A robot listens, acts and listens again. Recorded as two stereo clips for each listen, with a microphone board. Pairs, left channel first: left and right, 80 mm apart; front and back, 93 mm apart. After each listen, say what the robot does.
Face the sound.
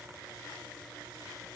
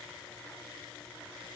Keep listening.
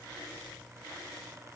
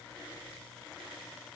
Keep listening.
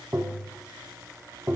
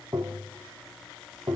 Turn 140° right.
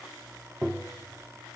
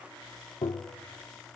Turn 10° right.
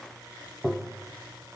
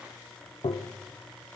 Facing the tapping.